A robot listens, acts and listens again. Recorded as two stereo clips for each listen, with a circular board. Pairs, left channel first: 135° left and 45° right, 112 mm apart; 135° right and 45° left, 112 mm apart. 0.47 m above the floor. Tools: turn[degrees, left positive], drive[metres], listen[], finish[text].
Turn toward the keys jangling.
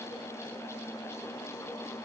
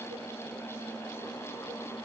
Action: listen[]
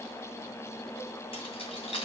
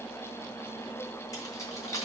Thought: The keys jangling: 160° left.
Action: turn[160]
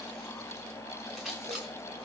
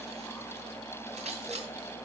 Thought: The keys jangling is now 45° left.
Action: turn[45]
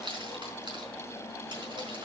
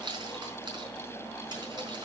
Action: finish[Facing the keys jangling, over 4 m away.]